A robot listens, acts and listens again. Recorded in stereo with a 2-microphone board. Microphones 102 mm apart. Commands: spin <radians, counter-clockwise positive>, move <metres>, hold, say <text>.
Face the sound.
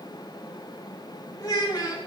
spin 0.70
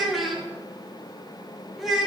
say Found it: a child speaking, straight ahead, 2 to 4 m away.